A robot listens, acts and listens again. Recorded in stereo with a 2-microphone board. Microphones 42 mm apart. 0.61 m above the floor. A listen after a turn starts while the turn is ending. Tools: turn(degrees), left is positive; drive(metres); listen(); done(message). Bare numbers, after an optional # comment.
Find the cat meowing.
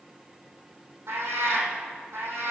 # The cat meowing: about 70° right or 110° right.
turn(-70)
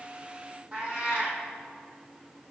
# So it is at 35° right.
turn(-35)
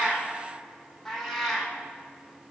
done("Found it: a cat meowing, straight ahead, 2 to 4 m away.")